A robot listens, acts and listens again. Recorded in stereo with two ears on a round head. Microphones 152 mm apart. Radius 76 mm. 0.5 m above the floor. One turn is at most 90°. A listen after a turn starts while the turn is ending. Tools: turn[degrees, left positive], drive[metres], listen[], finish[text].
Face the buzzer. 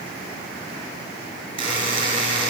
Thought: The buzzer: about 30° right or 150° right.
Action: turn[-30]
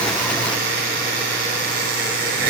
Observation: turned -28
Thought: So it is at 120° right.
Action: turn[-90]
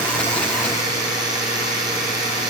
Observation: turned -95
Thought: The buzzer is now 25° right.
Action: turn[-25]
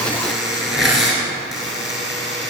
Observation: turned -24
Action: finish[Facing the buzzer, 2 to 4 m away.]